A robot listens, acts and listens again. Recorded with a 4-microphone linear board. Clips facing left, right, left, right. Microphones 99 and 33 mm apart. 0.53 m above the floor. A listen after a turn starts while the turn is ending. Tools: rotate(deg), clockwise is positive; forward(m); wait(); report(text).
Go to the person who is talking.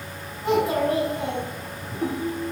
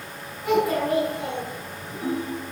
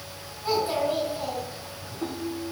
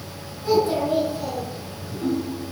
rotate(-30)
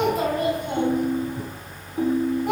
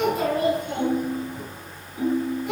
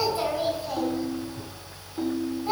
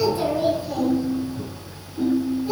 rotate(-120)
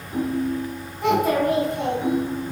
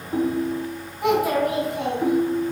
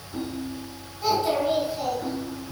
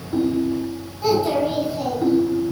rotate(10)
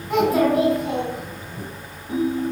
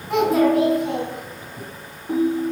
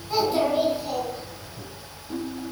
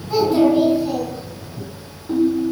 forward(1.0)
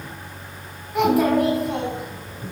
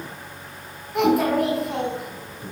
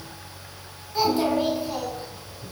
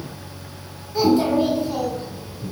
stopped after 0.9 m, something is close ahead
report("I am next to the child speaking.")